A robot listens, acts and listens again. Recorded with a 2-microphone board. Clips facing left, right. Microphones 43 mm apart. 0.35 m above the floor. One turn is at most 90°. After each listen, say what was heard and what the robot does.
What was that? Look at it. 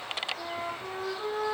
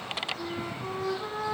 The flute: about 50° left or 130° left. Turn 50° left.
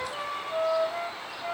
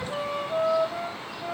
Facing the flute.